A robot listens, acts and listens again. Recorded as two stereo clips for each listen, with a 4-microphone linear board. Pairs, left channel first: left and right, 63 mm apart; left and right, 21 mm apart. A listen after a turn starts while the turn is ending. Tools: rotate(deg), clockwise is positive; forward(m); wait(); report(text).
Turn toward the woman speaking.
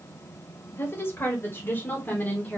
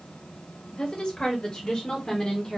rotate(-25)
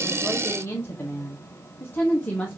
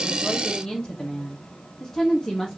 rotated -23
rotate(-20)
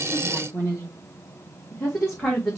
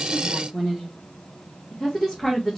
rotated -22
rotate(-30)
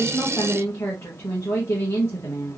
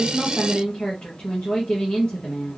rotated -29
rotate(-140)
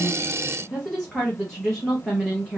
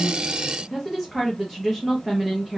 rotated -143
report("Facing the woman speaking.")